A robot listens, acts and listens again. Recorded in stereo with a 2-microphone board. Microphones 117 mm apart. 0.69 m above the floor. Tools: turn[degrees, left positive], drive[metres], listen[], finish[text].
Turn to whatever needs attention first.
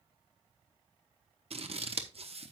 Action: listen[]
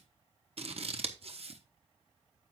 Action: listen[]
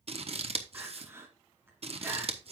Thought: The crying: about 20° right or 160° right.
Action: turn[-20]
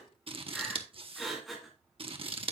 Action: finish[Facing the crying, 1 to 2 m away.]